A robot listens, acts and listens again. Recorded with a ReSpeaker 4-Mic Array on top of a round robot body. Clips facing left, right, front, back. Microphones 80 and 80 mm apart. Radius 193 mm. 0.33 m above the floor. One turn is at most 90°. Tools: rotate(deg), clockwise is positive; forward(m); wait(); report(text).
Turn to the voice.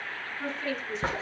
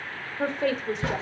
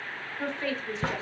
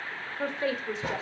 rotate(90)
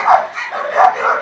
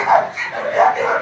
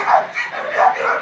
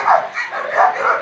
rotate(20)
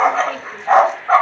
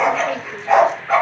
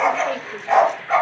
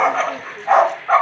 wait()
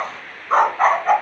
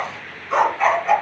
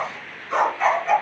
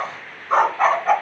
report("Facing where the woman speaking came from. I can't hear it now.")